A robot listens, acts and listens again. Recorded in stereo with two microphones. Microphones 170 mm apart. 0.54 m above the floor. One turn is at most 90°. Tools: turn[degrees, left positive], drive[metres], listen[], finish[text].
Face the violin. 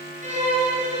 Thought: The violin: about 45° right or 135° right.
Action: turn[-45]
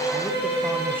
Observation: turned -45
Thought: So it is at 90° right.
Action: turn[-90]
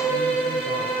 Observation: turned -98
Thought: The violin is now 10° left.
Action: turn[10]
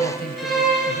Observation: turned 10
Action: finish[Found it: a violin, straight ahead, over 4 m away.]